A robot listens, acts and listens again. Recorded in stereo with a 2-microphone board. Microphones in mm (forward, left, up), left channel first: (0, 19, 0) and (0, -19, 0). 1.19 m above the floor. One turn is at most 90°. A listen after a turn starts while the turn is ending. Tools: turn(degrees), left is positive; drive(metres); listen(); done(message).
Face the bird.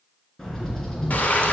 turn(degrees=30)
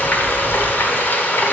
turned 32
turn(degrees=90)
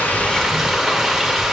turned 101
turn(degrees=40)
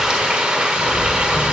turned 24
turn(degrees=15)
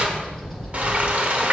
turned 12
done("Found it: a bird, straight ahead, 2 to 4 m away.")